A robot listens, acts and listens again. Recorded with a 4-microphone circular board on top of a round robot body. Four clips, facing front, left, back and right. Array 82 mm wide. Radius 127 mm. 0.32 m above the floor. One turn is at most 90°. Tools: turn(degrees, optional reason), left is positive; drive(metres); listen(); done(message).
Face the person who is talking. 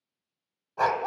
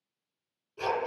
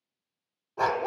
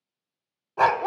listen()
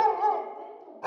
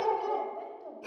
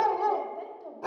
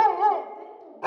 turn(degrees=90, reason="The woman speaking: 130° left.")
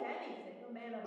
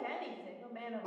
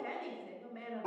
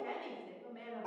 turn(degrees=55, reason="The woman speaking is now 55° left.")
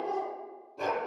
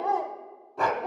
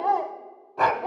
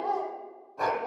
listen()
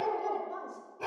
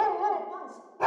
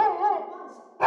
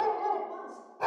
turn(degrees=20, reason="The woman speaking is now 20° left.")
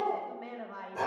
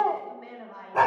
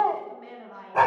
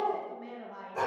done("Found it: a woman speaking, straight ahead, 1 to 2 m away.")